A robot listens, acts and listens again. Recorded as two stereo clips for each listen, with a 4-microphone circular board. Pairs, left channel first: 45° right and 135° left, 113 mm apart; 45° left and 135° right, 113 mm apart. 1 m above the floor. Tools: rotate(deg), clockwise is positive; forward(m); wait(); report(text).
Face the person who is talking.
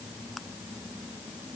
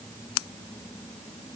wait()
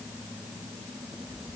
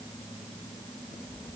wait()
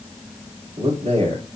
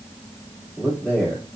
rotate(-125)
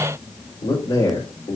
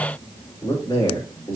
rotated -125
rotate(10)
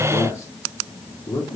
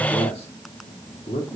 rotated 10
report("Facing the man speaking.")